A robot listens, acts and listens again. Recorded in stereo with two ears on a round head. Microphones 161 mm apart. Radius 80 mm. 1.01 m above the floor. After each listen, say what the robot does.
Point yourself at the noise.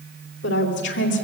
Turn 70° left.
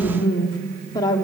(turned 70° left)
Turn 20° left.
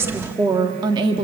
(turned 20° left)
Turn 30° right.
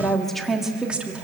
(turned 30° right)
Facing the woman speaking, 1 to 2 m away.